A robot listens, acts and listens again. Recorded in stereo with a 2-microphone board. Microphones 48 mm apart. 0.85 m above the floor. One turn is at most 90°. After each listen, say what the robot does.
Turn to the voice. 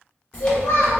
Turn 65° left.
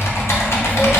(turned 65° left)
Keep listening.
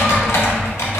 Keep listening.
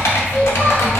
I heard a child speaking, but can't make it out now. It was about straight ahead or 50° left.